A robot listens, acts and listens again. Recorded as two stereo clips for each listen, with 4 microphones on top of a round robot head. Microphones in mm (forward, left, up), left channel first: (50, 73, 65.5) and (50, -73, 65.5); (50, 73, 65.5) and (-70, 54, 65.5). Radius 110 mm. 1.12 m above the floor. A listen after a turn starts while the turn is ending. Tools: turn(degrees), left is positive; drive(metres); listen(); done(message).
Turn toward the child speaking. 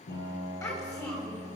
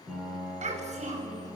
turn(degrees=165)
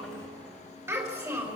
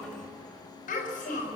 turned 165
turn(degrees=-20)
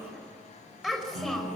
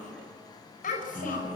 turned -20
done("Facing the child speaking.")